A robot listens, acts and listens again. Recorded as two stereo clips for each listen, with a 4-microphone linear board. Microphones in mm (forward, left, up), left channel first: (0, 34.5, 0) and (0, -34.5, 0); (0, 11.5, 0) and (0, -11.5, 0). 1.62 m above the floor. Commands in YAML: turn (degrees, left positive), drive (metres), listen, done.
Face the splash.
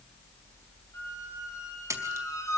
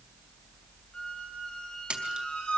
turn: -45
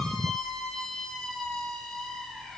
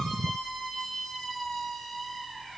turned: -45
listen: true
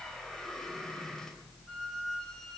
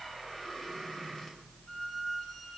done: "I heard a splash, but can't make it out now. It was about straight ahead or 90° right."